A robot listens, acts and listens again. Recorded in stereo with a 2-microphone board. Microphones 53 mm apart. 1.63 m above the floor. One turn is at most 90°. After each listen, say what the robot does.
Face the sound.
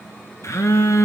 Turn 90° left.
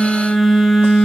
Found it: a phone buzzing, straight ahead.